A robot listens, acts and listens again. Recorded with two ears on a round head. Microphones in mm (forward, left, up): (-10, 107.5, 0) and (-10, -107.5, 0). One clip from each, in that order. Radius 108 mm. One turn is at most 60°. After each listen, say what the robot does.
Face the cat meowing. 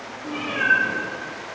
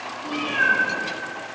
Turn 60° right.
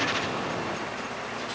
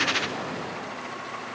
Found it: a cat meowing, straight ahead.